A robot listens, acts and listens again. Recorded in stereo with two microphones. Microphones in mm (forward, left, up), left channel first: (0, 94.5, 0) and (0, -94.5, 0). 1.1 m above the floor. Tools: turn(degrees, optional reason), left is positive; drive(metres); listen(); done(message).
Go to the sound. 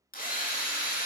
turn(degrees=50, reason="The drill: about 50° left or 130° left.")
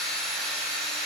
drive(metres=1.0)
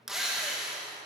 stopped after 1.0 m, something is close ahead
done("Arrived at the drill, straight ahead.")